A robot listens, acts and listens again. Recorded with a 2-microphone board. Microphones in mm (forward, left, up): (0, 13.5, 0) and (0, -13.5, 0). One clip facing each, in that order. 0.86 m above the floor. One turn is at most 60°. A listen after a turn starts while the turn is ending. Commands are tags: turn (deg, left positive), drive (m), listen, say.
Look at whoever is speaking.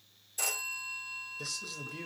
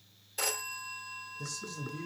<turn deg="60"/>
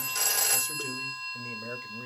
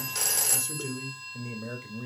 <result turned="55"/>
<say>Facing the man speaking.</say>